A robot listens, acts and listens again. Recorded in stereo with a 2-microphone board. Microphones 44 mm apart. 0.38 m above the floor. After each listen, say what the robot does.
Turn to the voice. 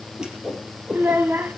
Turn 65° right.
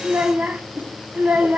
Turn 45° right.
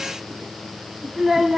Turn 10° right.
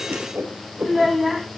Facing the child speaking, 1 to 2 m away.